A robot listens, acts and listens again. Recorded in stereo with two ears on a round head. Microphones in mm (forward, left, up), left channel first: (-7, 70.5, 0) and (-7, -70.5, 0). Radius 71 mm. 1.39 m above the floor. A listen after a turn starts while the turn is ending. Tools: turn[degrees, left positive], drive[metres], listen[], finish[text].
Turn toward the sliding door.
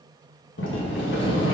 Action: turn[90]
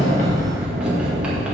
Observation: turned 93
Action: finish[Facing the sliding door, 1 to 2 m away.]